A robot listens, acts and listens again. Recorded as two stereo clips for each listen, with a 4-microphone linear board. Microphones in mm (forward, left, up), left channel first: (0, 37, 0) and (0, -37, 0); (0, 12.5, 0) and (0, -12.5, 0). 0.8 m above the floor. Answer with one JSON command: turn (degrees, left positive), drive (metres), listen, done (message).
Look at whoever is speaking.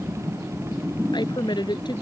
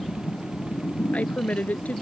{"turn": 90}
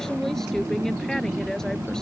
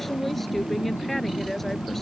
{"listen": true}
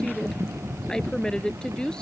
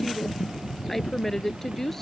{"turn": 10}
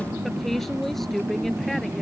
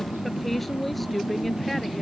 {"done": "Facing the woman speaking."}